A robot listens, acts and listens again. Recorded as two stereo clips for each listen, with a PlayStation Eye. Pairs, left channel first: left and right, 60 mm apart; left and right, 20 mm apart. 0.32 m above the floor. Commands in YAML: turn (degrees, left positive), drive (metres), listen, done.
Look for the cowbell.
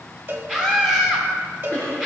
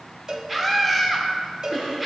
turn: -40
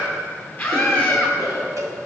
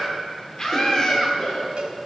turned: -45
turn: -90
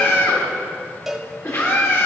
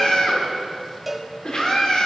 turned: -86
done: "Facing the cowbell, under 1 m away."